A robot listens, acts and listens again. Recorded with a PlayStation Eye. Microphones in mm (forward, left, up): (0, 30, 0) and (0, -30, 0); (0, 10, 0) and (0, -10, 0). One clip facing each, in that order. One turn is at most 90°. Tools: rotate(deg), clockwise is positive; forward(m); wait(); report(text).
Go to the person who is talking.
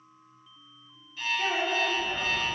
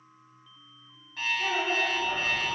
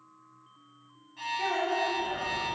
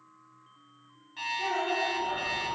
rotate(-75)
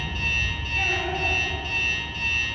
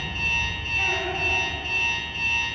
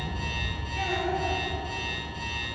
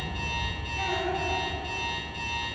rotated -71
wait()
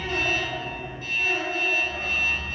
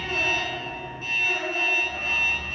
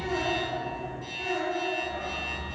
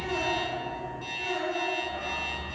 rotate(-35)
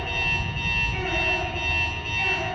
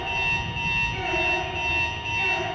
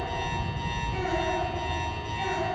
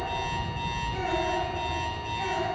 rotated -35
wait()
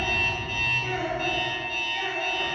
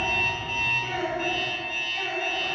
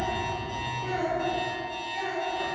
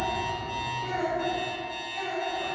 forward(1.0)
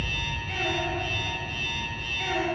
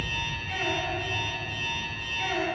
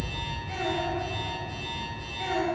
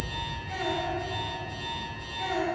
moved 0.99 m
wait()
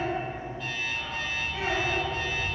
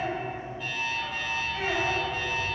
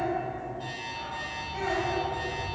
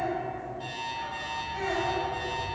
wait()
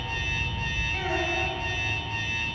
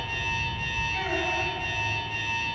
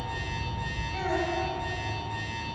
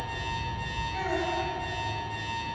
report("Facing where the child speaking came from. I can't hear it now. I did not reach it.")